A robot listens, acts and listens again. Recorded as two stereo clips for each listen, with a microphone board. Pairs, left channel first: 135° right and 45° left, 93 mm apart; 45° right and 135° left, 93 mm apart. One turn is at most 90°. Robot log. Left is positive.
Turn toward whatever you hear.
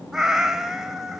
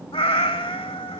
note: The cat meowing: 40° right.
cmd yaw -40
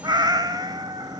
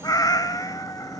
end: Found it: a cat meowing, straight ahead.